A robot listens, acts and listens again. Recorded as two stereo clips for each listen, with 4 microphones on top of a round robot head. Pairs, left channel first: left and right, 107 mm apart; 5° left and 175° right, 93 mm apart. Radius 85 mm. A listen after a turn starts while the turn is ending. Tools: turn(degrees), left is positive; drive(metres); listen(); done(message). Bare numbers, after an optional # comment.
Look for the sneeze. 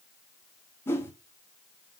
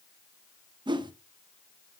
listen()
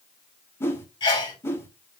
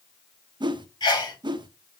# The sneeze: 50° left.
turn(50)
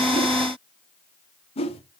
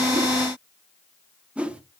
done("I heard a sneeze from this way, but can't make it out now.")